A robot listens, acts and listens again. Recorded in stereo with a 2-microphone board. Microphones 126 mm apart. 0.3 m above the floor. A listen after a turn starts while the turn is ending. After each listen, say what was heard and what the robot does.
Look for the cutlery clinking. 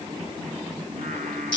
Keep listening.
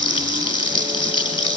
Keep listening.
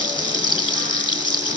I can't make out cutlery clinking, only singing and frying.